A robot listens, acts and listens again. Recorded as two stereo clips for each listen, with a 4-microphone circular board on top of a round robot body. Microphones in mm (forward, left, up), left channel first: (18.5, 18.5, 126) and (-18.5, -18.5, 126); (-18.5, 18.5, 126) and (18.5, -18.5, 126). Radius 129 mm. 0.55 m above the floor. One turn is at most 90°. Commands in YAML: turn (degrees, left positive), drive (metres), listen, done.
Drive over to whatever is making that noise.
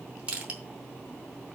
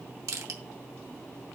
turn: -70
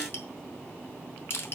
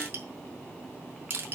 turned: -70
drive: 1.0
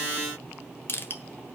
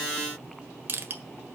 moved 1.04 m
drive: 1.0
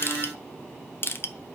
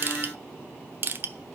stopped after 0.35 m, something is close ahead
done: "I am next to the crushing."